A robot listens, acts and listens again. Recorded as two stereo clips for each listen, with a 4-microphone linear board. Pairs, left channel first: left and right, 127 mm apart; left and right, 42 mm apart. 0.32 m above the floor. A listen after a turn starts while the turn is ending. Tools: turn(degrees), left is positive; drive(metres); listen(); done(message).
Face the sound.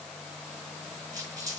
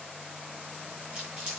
turn(degrees=-25)
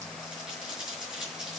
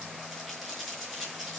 done("Facing the crumpling.")